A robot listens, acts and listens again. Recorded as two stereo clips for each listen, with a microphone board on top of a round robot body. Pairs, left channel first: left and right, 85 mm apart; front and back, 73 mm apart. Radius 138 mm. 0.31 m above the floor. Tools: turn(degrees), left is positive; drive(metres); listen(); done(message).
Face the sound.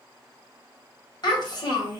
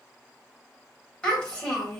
turn(degrees=80)
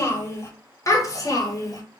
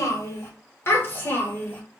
turn(degrees=60)
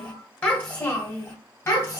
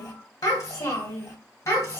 turn(degrees=30)
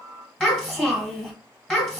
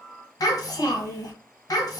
done("Facing the child speaking.")